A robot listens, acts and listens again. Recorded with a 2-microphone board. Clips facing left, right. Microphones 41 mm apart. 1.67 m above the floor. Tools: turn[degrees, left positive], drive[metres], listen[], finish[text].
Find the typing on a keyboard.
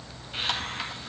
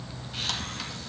Action: listen[]
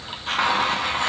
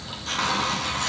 Action: listen[]
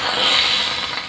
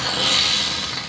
Action: finish[I can't make out typing on a keyboard, only a hiss.]